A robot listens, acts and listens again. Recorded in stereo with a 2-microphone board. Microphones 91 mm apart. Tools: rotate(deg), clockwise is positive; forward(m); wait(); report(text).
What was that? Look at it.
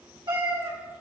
rotate(65)
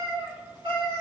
rotate(70)
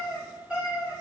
rotate(15)
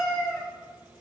report("Facing the cat meowing.")